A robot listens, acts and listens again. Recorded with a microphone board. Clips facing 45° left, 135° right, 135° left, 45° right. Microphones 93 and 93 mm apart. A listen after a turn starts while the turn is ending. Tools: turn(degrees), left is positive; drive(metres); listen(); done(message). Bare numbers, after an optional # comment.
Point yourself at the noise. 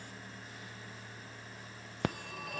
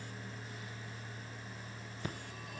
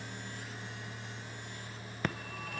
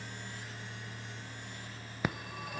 # The phone ringing: 35° left.
turn(35)
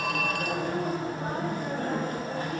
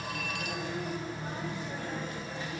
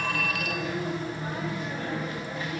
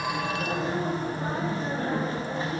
# The phone ringing is now 10° left.
turn(10)
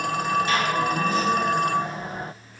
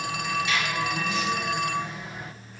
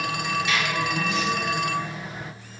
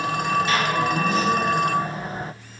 done("Facing the phone ringing, under 1 m away.")